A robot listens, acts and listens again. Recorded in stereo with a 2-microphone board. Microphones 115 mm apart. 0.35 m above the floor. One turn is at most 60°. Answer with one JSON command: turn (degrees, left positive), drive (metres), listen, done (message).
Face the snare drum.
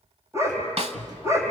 {"turn": -60}
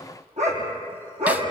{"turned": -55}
{"listen": true}
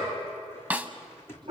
{"turn": -15}
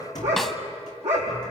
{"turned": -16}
{"listen": true}
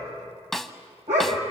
{"done": "Found it: a snare drum, straight ahead, under 1 m away."}